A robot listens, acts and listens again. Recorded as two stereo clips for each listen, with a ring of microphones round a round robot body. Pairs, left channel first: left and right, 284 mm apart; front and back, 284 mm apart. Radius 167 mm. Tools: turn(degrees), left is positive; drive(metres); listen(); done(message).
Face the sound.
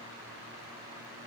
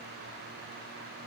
listen()
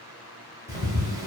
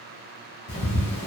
turn(degrees=-15)
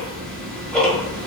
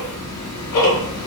done("Found it: ticking, straight ahead, under 1 m away.")